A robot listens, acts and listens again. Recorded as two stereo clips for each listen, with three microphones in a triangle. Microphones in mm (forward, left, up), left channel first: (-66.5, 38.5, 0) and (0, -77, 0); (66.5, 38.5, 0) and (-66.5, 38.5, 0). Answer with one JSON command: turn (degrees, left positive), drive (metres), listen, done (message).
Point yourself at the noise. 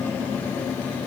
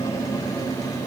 {"listen": true}
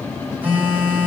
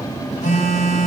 {"turn": 15}
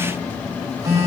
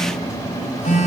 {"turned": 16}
{"done": "Found it: a phone buzzing, straight ahead."}